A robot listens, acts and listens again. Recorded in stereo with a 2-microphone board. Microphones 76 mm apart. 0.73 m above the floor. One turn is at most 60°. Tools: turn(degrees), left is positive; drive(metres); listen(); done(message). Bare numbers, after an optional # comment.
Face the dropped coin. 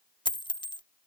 # The dropped coin: about 70° left or 110° left.
turn(60)
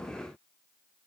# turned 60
listen()
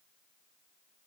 done("I heard a dropped coin, but can't make it out now. It was about 10° left or 50° left.")